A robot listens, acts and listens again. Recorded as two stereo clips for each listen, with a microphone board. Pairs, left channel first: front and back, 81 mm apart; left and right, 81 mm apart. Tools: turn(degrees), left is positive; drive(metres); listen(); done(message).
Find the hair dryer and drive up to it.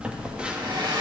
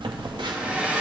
turn(degrees=-165)
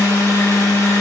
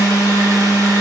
listen()
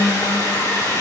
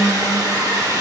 turn(degrees=-50)
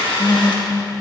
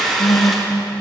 drive(metres=1.0)
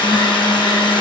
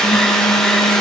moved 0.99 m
turn(degrees=10)
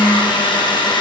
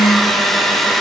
drive(metres=1.0)
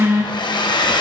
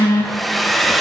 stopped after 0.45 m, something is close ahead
done("Arrived at the hair dryer, straight ahead.")